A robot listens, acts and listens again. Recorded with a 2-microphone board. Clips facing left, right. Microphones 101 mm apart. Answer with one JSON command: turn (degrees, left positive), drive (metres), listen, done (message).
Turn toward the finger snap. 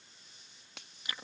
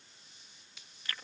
{"turn": 65}
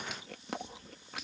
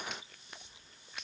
{"listen": true}
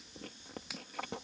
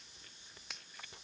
{"done": "Facing the finger snap."}